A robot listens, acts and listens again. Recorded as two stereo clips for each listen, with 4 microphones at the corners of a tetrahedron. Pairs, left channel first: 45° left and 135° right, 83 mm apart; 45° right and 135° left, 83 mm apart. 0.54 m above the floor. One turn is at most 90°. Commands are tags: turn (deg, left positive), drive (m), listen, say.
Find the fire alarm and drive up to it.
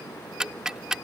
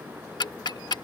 <listen/>
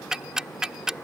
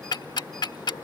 <listen/>
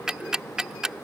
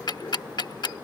<say>I can't make out a fire alarm, only ticking.</say>